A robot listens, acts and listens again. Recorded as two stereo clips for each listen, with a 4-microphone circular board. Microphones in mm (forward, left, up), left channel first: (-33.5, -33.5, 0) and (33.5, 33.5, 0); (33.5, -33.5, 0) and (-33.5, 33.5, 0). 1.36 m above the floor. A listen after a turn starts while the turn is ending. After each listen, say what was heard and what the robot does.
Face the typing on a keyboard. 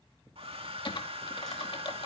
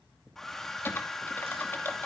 The typing on a keyboard: 110° right. Turn 110° right.
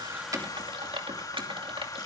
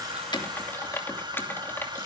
The typing on a keyboard is now 20° left. Turn 20° left.
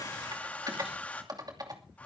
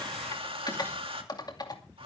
Found it: typing on a keyboard, straight ahead, 2 to 4 m away.